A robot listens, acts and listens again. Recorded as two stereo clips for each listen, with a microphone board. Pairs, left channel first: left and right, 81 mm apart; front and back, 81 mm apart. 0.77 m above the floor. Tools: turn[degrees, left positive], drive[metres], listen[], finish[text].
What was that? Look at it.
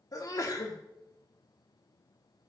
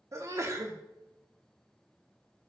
Thought: The sneeze: 130° left.
Action: turn[130]
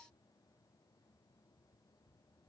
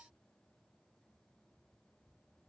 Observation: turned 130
Action: finish[I heard a sneeze from this way, but can't make it out now.]